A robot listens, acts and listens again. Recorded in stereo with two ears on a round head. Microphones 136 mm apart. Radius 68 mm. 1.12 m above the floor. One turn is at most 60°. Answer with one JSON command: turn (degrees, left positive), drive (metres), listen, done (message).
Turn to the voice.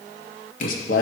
{"turn": 60}
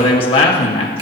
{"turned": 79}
{"turn": 35}
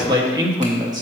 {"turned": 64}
{"turn": -25}
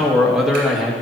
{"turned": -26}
{"done": "Facing the man speaking, 1 to 2 m away."}